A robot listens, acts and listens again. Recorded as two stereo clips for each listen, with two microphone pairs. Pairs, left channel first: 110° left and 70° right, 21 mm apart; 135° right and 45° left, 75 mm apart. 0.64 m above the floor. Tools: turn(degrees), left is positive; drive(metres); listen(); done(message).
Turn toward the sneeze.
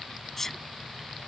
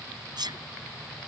turn(degrees=35)
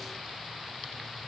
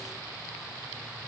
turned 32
done("I heard a sneeze from this way, but can't make it out now.")